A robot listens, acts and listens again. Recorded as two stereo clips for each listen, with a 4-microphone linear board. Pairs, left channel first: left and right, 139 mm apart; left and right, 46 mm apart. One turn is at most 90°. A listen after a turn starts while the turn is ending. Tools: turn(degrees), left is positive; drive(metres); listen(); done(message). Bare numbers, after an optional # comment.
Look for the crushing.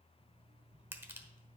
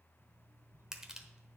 # The crushing: about 15° right or 165° right.
turn(-15)
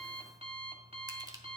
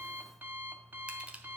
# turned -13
listen()
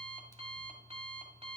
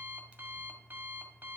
listen()
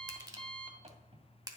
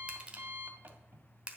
# So it is at 155° right.
turn(-90)
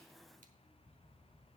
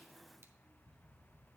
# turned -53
# Nothing new. It was at 100° right.
turn(-90)
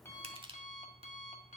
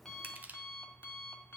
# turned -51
# The crushing is now 45° right.
turn(-45)
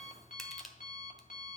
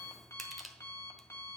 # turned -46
done("Found it: crushing, straight ahead, 1 to 2 m away.")